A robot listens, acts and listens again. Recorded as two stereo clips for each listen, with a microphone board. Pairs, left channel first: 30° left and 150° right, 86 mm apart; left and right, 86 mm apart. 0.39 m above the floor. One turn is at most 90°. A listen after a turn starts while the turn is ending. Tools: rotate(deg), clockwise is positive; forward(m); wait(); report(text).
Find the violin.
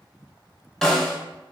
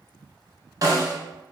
wait()
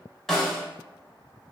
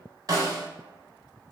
wait()
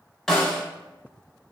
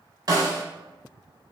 report("I can't make out a violin to turn to.")